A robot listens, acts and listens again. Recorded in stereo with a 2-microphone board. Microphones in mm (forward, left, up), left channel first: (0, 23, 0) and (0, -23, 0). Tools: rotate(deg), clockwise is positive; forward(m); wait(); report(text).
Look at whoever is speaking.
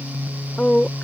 rotate(-25)
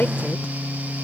wait()
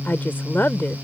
rotate(-125)
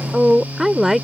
report("Found it: a woman speaking, straight ahead.")